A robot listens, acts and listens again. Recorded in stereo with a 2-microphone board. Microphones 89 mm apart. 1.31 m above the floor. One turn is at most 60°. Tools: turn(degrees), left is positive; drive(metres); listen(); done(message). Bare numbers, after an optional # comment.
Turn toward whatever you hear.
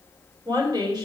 # The woman speaking: about 50° right or 130° right.
turn(-50)
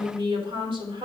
# So it is at 85° right.
turn(-60)
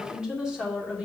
# The woman speaking is now 15° right.
turn(-15)
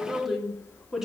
done("Found it: a woman speaking, straight ahead.")